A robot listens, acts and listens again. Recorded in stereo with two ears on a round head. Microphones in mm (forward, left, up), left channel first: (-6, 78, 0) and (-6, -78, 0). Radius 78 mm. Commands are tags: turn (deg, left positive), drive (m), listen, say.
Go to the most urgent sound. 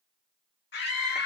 <turn deg="65"/>
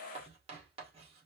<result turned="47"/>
<listen/>
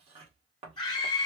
<turn deg="30"/>
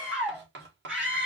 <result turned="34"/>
<drive m="1.0"/>
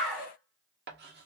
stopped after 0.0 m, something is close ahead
<say>Blocked. The scream is further on, straight ahead.</say>